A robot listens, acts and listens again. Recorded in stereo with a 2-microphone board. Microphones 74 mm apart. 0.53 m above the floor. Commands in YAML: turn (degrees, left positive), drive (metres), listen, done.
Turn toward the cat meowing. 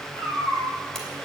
turn: -65
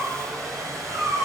turn: -50
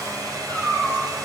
done: "Found it: a cat meowing, straight ahead."